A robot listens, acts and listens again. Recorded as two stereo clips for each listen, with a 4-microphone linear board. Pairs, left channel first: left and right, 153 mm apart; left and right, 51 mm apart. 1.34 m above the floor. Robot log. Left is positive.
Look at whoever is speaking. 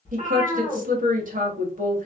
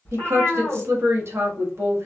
note: The woman speaking: about 55° right or 125° right.
cmd yaw -55
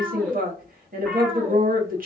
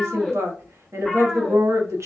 note: So it is at 65° right.
cmd yaw -65
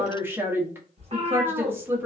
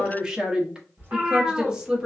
note: The woman speaking is now 15° right.
cmd yaw -15
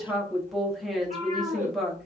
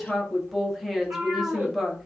end: Facing the woman speaking.